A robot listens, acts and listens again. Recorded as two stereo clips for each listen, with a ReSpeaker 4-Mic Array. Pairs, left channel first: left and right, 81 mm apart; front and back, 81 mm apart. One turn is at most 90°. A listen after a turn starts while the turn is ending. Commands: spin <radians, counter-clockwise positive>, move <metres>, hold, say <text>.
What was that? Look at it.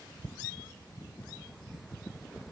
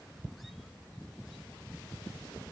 hold
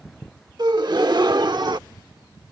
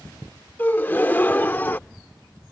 spin -1.13
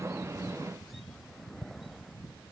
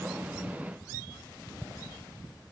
say I heard a gasp from this way, but can't make it out now.